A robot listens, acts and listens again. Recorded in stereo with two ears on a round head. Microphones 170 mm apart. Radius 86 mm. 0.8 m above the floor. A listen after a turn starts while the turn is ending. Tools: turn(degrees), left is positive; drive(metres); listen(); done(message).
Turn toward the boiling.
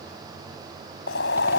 turn(degrees=60)
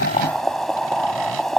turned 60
done("Facing the boiling.")